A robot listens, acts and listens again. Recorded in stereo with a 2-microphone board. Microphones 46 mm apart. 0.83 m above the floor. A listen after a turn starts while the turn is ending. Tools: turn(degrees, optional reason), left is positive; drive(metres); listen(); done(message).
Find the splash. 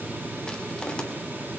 listen()
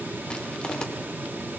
listen()
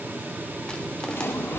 turn(degrees=55, reason="The splash: about 55° left or 125° left.")
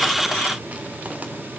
listen()
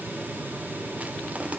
done("I heard a splash, but can't make it out now. It was about straight ahead or 70° left.")